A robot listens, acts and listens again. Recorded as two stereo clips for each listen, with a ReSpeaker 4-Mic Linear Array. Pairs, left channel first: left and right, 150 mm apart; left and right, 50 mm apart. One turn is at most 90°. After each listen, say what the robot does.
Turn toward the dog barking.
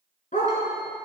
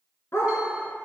Turn 60° left.
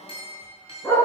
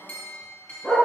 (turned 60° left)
Turn 15° left.
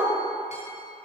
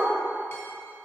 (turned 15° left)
Facing the dog barking, 2 to 4 m away.